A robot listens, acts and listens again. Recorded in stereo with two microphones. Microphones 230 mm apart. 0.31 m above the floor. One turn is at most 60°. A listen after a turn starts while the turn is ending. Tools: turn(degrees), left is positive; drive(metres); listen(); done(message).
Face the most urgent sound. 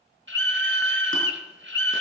turn(degrees=-55)
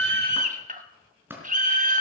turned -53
turn(degrees=-45)
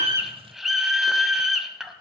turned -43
done("Facing the scream.")